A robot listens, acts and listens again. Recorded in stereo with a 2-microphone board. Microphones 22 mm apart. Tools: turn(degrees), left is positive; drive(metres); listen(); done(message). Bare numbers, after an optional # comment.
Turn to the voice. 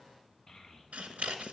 # The child speaking: about 15° left or 165° left.
turn(15)
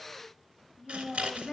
done("Found it: a child speaking, straight ahead, 2 to 4 m away.")